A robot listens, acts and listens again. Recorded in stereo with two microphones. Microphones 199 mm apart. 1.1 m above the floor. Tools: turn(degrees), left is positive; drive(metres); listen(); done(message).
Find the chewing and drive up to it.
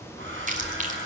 turn(degrees=-40)
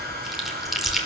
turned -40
drive(metres=1.0)
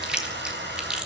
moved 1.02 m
drive(metres=1.0)
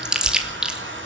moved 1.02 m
drive(metres=1.0)
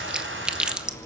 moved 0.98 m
drive(metres=1.0)
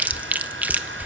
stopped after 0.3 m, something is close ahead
turn(degrees=-10)
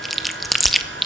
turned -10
done("I am next to the chewing.")